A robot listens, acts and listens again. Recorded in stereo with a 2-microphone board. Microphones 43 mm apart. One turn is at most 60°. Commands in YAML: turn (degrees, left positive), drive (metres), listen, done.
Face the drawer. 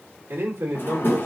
turn: 55
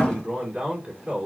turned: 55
turn: 30
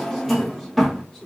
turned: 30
done: "Facing the drawer."